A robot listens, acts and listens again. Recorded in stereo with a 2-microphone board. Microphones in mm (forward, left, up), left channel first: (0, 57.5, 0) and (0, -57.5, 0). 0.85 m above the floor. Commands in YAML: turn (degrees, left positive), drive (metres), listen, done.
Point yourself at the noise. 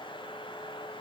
listen: true
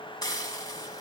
turn: 35
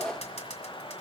turn: 110
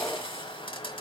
turn: 55
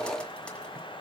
listen: true
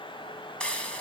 turn: 10
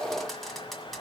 done: "Found it: frying, straight ahead, 1 to 2 m away."